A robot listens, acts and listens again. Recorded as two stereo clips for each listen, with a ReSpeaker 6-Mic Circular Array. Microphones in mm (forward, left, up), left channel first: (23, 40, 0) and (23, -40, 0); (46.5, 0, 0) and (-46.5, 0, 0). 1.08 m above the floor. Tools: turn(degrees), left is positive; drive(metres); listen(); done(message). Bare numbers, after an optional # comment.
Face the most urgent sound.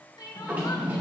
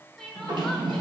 # The crying: 85° left.
turn(85)
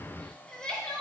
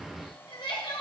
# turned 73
# The crying is now 10° left.
turn(10)
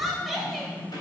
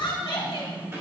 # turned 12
done("Found it: crying, straight ahead.")